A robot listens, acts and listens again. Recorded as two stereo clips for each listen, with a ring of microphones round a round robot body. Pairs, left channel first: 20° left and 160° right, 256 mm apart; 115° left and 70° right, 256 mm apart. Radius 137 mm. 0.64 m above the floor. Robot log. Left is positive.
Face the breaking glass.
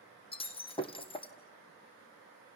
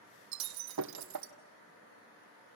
note: The breaking glass: 45° right.
cmd yaw -45
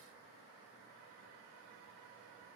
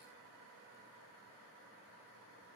end: Facing where the breaking glass came from. I can't hear it now.